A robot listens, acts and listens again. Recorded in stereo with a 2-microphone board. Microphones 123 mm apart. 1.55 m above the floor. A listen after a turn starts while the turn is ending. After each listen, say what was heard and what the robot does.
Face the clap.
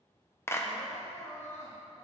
The clap: about 20° left or 160° left. Turn 20° left.
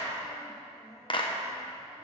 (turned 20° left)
So it is at 140° left. Turn 140° left.
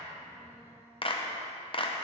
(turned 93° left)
The clap is now 45° left. Turn 45° left.
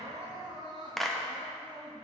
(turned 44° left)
Facing the clap, 1 to 2 m away.